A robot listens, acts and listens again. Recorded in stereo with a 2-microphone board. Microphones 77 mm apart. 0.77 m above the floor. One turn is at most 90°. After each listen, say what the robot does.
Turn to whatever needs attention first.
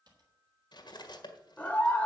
Turn 20° left.
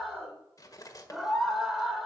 Found it: a scream, straight ahead.